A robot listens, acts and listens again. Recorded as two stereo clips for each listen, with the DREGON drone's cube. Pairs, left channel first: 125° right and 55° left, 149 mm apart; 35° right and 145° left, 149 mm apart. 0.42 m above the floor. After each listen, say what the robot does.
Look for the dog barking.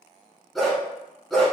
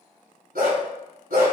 Turn 150° left.
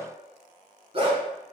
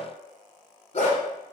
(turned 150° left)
Found it: a dog barking, straight ahead, 1 to 2 m away.